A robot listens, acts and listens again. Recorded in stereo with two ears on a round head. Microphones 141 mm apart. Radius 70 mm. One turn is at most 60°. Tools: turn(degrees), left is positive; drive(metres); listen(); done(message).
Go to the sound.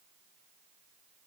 listen()
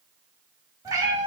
turn(degrees=-25)
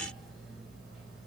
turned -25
listen()
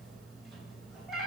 drive(metres=1.0)
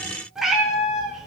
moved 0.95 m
drive(metres=1.0)
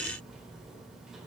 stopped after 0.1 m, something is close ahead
listen()
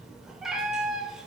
done("Arrived at the cat meowing, straight ahead.")